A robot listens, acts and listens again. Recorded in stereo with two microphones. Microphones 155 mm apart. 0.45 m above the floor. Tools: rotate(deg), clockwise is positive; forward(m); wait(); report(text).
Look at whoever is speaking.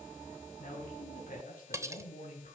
rotate(-55)
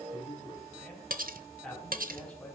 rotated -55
rotate(-10)
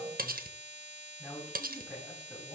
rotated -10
report("Found it: a man speaking, straight ahead.")